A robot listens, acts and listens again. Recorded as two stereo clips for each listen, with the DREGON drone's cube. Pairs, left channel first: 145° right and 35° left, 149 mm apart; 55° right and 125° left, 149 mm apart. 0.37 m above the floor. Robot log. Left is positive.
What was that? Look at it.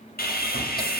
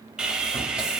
note: The sawing: 150° right.
cmd yaw -150
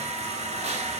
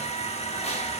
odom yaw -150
note: The sawing is now 10° right.
cmd yaw -10
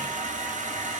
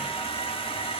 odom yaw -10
end: Found it: sawing, straight ahead, under 1 m away.